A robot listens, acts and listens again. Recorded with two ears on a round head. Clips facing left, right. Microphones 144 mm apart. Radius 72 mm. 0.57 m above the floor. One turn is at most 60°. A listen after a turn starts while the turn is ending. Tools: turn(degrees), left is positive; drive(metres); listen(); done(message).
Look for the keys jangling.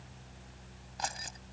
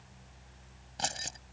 turn(degrees=-30)
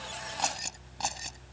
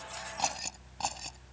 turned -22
done("Found it: keys jangling, straight ahead.")